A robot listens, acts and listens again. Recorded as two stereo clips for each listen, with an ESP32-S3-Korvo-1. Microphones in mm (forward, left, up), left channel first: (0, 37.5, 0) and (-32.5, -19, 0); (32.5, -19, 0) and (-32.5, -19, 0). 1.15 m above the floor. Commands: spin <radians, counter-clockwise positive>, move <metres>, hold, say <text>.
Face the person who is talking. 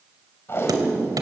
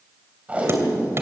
hold
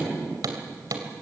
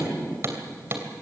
hold
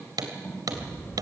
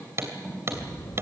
say Found it: a child speaking, straight ahead, 2 to 4 m away.